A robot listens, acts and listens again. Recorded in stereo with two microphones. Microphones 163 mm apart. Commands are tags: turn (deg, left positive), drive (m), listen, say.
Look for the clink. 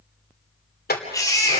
<turn deg="90"/>
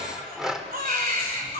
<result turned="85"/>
<say>Facing the clink.</say>